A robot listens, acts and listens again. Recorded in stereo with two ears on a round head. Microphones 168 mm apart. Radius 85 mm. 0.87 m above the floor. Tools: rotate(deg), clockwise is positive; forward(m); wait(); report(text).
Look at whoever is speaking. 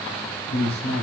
rotate(-65)
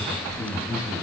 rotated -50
rotate(-55)
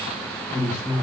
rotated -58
rotate(-10)
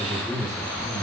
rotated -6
report("Facing the man speaking, 2 to 4 m away.")